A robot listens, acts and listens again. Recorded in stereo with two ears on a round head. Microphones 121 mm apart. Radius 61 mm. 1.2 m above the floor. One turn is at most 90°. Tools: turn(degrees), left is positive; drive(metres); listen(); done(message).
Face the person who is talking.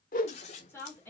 turn(degrees=15)
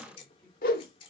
listen()
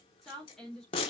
done("Facing the woman speaking, 2 to 4 m away.")